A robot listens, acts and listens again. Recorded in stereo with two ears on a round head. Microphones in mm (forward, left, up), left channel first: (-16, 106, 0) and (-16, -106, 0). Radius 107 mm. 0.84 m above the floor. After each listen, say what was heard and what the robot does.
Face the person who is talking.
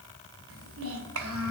The child speaking: about 60° right or 120° right. Turn 60° right.
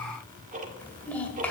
Facing the child speaking, 2 to 4 m away.